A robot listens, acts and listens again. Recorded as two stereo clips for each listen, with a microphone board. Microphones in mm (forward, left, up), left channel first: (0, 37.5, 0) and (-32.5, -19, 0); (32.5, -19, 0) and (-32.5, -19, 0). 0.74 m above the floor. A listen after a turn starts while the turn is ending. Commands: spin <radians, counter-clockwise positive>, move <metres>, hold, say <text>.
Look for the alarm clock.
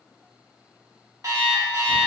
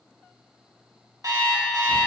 spin -2.71
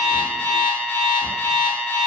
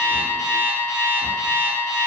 say Found it: an alarm clock, straight ahead, under 1 m away.